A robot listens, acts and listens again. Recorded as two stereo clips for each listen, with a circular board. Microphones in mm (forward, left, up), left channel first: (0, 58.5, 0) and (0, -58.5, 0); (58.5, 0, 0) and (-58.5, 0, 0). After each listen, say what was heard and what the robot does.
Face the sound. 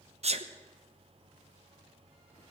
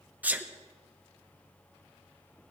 The sneeze: 105° right. Turn 105° right.
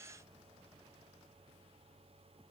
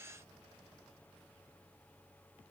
Facing where the sneeze came from. I can't hear it now.